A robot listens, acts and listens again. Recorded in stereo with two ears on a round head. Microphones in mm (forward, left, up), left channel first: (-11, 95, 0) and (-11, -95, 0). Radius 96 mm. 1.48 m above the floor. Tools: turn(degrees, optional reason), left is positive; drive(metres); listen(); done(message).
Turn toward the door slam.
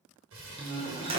turn(degrees=-25, reason="The door slam: about 25° right or 155° right.")
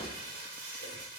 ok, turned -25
listen()
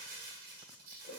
done("I heard a door slam, but can't make it out now. It was about straight ahead or 130° right.")